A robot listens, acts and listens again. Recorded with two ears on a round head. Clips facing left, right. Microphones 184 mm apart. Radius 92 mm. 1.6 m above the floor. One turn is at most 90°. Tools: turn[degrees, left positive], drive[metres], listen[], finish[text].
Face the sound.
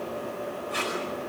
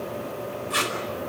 Thought: The tape being pulled: about 70° right or 110° right.
Action: turn[-70]
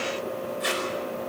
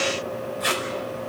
Action: finish[Facing the tape being pulled, over 4 m away.]